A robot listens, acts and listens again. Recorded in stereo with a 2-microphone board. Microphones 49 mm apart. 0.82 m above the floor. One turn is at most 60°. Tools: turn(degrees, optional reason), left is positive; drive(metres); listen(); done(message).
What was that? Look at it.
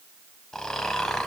turn(degrees=30)
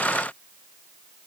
listen()
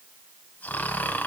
turn(degrees=60, reason="So it is at 140° left.")
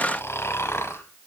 turn(degrees=60, reason="The snoring is now 95° left.")
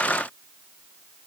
turn(degrees=35, reason="Nothing new. It was at 35° left.")
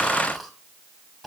done("Facing the snoring.")